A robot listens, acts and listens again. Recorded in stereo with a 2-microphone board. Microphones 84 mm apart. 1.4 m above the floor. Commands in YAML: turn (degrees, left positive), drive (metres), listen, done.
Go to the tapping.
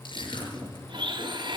turn: -55
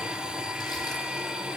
listen: true
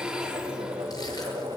turn: -70
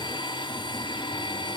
listen: true
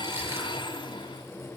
listen: true
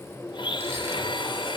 turn: 10
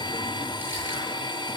listen: true
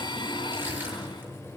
drive: 1.0
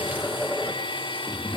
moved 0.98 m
drive: 1.0
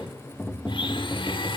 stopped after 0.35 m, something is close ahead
done: "Arrived at the tapping, straight ahead."